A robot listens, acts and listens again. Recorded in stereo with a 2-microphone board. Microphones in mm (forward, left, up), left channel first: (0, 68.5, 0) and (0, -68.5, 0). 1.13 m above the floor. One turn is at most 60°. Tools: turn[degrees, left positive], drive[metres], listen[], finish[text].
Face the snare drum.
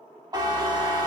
Action: listen[]
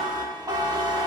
Action: listen[]
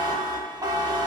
Action: finish[I can't make out a snare drum to turn to.]